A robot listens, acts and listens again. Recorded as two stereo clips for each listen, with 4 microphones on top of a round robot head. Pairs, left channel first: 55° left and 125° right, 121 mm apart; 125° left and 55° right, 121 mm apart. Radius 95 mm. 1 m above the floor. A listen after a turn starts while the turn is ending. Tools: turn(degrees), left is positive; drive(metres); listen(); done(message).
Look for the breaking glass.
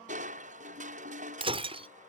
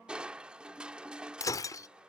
turn(degrees=-170)
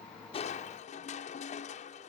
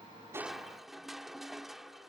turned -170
done("I heard breaking glass from this way, but can't make it out now.")